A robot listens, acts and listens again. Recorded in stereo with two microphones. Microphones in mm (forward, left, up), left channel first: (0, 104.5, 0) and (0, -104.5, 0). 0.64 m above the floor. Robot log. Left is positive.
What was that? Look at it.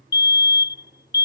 note: The fire alarm: about 60° left or 120° left.
cmd yaw +60
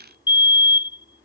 note: So it is at 25° left.
cmd yaw +25
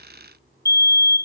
note: The fire alarm is now 20° left.
cmd yaw +20
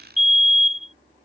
end: Found it: a fire alarm, straight ahead.